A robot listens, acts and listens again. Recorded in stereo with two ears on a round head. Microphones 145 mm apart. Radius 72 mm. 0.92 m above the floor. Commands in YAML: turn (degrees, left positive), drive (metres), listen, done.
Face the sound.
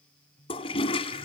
turn: 35
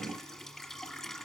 done: "Facing the toilet flushing, 1 to 2 m away."